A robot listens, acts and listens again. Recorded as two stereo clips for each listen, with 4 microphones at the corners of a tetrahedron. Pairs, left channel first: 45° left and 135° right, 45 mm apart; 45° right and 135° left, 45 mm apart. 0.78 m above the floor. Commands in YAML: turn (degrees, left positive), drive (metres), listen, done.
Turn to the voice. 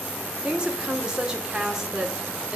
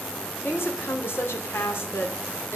turn: -60
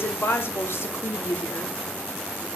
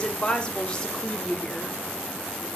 turn: 30
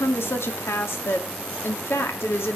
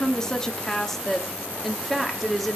turn: 45
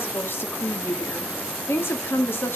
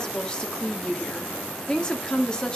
turn: 25
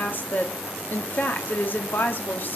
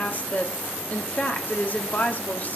done: "Facing the woman speaking, 1 to 2 m away."